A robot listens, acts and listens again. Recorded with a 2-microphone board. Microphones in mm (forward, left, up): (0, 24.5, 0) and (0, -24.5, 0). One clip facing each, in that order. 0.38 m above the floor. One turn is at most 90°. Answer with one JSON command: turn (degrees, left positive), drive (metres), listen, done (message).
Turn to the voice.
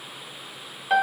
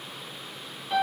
{"listen": true}
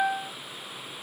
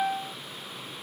{"listen": true}
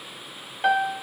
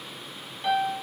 {"done": "I can't make out anyone speaking to turn to."}